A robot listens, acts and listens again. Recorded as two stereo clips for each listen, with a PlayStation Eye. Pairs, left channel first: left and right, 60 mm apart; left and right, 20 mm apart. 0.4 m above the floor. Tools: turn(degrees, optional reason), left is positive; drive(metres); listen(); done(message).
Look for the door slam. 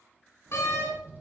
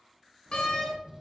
turn(degrees=45, reason="The door slam: about 45° left or 135° left.")
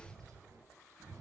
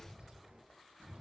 listen()
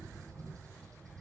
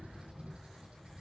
done("I heard a door slam, but can't make it out now. It was about straight ahead or 90° left.")